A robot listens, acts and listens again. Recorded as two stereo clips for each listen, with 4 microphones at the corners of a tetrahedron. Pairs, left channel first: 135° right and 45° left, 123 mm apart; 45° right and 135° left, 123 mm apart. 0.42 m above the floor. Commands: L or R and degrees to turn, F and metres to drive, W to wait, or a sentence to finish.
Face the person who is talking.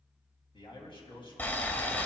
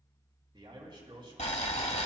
L180
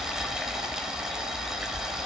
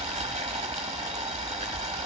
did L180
W
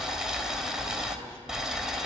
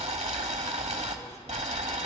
W
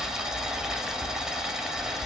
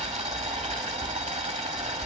I heard a man speaking from this way, but can't make it out now.